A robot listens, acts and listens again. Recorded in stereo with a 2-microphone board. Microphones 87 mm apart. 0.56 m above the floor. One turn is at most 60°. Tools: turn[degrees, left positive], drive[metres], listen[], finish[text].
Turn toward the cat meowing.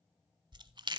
Action: listen[]
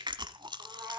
Thought: The cat meowing: about 25° right or 155° right.
Action: turn[-25]
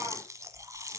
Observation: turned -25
Action: listen[]
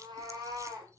Thought: So it is at 130° right.
Action: turn[-60]
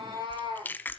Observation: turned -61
Thought: The cat meowing is now 65° right.
Action: turn[-60]
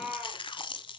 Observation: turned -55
Thought: The cat meowing is now 10° right.
Action: turn[-10]
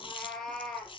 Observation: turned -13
Action: finish[Facing the cat meowing, 2 to 4 m away.]